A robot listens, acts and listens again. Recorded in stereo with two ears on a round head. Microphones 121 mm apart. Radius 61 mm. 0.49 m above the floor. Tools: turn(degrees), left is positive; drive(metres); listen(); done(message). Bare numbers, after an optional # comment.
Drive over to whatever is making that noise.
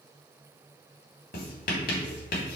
# The writing: about 70° left or 110° left.
turn(70)
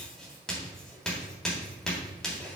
drive(1.0)
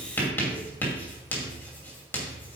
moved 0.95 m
# The writing is now 15° left.
turn(15)
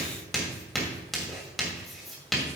drive(1.0)
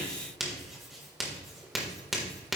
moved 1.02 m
drive(1.0)
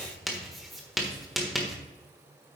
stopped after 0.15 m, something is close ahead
done("Arrived at the writing, straight ahead.")